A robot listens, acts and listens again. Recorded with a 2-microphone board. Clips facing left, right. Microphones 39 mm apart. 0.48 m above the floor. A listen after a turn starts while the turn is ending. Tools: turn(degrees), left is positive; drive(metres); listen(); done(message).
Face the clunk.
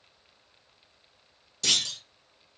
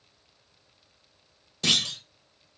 turn(degrees=-25)
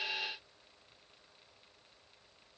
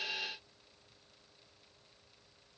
listen()
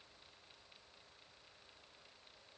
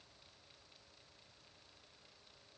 done("I heard a clunk, but can't make it out now. It was about straight ahead or 130° right.")